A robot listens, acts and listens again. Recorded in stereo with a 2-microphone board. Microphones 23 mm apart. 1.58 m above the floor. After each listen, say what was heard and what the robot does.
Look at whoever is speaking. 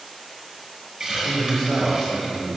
The man speaking: about 30° left or 150° left. Turn 30° left.
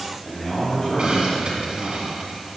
So it is at 110° left. Turn 110° left.
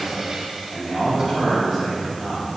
Found it: a man speaking, straight ahead.